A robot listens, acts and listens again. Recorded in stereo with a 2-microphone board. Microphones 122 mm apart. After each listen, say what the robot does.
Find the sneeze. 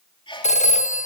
Turn 45° left.
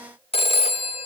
Keep listening.
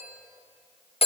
I heard a sneeze, but can't make it out now. It was about straight ahead or 90° left.